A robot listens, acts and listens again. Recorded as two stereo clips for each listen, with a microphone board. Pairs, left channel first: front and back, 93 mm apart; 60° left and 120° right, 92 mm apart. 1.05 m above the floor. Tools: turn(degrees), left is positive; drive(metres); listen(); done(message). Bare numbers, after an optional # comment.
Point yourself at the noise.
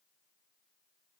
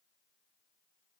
listen()
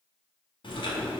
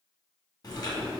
# The chewing: 20° left.
turn(20)
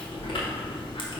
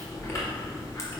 done("Facing the chewing.")